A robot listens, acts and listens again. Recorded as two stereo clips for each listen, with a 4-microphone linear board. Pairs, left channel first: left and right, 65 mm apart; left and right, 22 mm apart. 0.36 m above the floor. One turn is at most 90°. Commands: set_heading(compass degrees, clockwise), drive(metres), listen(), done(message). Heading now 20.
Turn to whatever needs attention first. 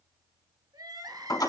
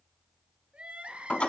set_heading(110)
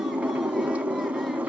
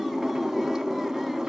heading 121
set_heading(111)
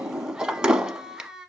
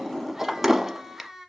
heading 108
set_heading(118)
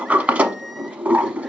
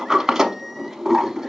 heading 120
listen()
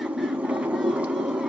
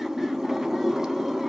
listen()
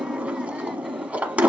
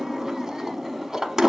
done("I heard crying from this way, but can't make it out now.")